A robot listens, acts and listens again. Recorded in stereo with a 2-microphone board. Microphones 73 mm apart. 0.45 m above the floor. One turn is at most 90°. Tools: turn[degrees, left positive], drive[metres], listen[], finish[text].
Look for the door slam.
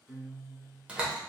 Thought: The door slam: about 15° right or 165° right.
Action: turn[-15]
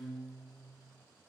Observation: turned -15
Action: listen[]
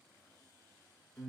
Action: finish[I heard a door slam, but can't make it out now. It was about straight ahead or 150° right.]